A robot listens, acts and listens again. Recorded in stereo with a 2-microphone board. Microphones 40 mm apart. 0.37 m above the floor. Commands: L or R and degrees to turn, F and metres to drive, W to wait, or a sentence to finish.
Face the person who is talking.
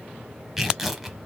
W
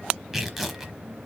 W
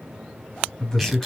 L30
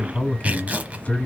L140
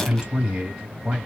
R20
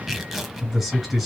Found it: a man speaking, straight ahead, 2 to 4 m away.